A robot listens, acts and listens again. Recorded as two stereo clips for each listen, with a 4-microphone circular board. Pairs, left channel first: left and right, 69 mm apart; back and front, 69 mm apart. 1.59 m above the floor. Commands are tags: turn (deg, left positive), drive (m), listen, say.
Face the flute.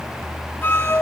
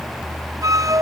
<turn deg="30"/>
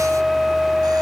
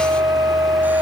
<say>Found it: a flute, straight ahead.</say>